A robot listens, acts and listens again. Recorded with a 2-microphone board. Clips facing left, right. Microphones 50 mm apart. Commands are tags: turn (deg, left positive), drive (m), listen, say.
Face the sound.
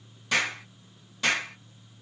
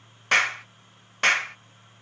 <turn deg="-55"/>
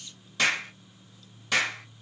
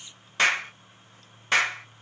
<turn deg="-50"/>
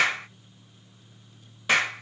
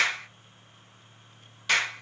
<turn deg="20"/>
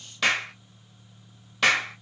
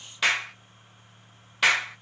<say>Facing the clap.</say>